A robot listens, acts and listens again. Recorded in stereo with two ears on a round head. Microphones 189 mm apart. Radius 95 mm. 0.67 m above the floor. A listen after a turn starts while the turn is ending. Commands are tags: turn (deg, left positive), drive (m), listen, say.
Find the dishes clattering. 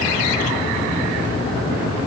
<listen/>
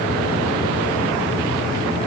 <listen/>
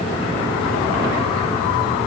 <say>I can't make out dishes clattering.</say>